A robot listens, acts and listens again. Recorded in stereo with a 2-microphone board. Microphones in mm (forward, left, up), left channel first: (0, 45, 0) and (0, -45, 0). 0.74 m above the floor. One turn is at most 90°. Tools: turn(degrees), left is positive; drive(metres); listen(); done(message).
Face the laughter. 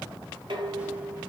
listen()
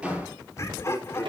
turn(degrees=30)
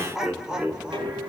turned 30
turn(degrees=-10)
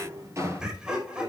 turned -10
turn(degrees=-10)
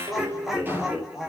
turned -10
done("Facing the laughter.")